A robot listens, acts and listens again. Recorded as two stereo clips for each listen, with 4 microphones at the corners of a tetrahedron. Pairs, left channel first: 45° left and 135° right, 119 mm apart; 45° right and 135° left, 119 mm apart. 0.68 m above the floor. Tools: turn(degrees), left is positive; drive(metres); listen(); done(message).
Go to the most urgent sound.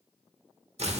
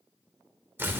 listen()
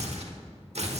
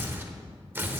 listen()
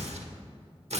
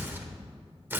done("I can't make out anything urgent to turn to.")